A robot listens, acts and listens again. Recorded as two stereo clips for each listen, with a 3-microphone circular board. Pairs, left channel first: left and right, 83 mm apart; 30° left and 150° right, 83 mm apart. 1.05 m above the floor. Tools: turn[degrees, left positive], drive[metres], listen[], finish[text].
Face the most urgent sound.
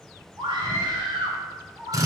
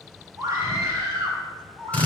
Thought: The scream: 100° right.
Action: turn[-100]
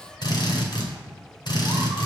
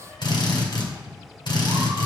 Action: listen[]
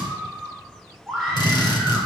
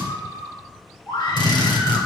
Action: finish[Found it: a scream, straight ahead, 2 to 4 m away.]